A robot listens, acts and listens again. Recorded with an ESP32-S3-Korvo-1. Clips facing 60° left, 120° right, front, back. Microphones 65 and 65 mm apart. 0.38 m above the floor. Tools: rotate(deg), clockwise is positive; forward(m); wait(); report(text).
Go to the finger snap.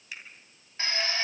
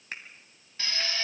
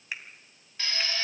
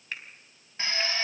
rotate(75)
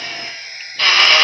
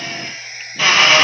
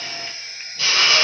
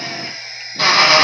wait()
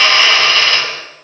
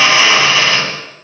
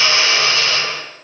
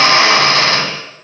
wait()
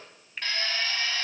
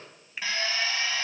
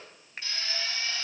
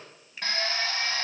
rotate(35)
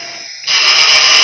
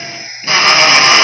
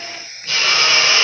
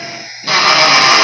wait()
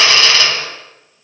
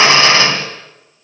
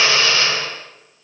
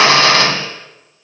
wait()
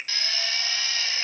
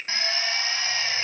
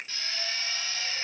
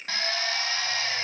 rotate(10)
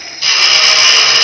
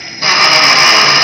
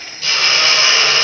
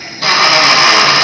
wait()
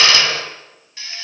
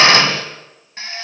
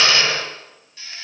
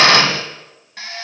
wait()
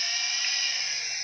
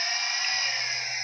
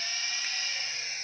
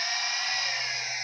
report("Facing where the finger snap came from. I can't hear it now. I did not reach it.")